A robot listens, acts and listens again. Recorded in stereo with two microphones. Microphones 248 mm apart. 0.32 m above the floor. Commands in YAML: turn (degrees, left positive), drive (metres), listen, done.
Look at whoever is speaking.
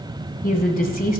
turn: 35
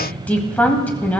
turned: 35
turn: 10
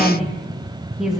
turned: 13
done: "Found it: a woman speaking, straight ahead."